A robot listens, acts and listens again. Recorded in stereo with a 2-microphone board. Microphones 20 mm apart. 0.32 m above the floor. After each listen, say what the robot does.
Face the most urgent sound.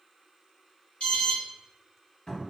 Turn 65° left.
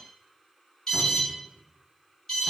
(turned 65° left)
Turn 25° left.
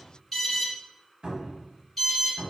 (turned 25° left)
Facing the alarm.